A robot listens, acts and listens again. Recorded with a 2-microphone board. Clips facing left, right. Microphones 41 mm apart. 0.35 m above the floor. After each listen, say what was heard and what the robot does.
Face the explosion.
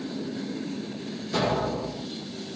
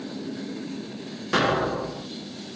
The explosion: about 70° right or 110° right. Turn 70° right.
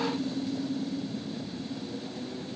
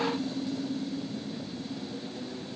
Keep listening.
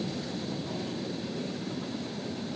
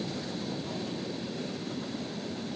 I heard an explosion, but can't make it out now. It was about straight ahead or 40° right.